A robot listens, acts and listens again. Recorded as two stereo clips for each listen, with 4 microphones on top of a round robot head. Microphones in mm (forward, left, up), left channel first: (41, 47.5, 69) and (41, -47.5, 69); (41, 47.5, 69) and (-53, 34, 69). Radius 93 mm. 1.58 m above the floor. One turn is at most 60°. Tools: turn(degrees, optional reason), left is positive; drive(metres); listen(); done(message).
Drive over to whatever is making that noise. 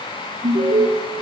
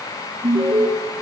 turn(degrees=-60, reason="The alarm: 115° right.")
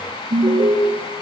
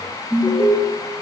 turn(degrees=-60, reason="The alarm is now 60° right.")
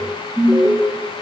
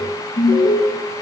drive(metres=1.0)
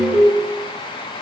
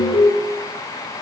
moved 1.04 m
drive(metres=1.0)
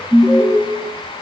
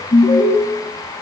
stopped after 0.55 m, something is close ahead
done("Arrived at the alarm, straight ahead.")